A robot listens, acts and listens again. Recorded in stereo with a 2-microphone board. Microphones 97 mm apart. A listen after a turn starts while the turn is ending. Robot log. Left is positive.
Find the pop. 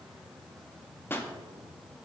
note: The pop: about 25° left or 155° left.
cmd yaw +25
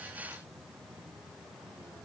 cmd idle
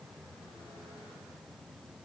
end: I heard a pop, but can't make it out now. It was about straight ahead or 130° left.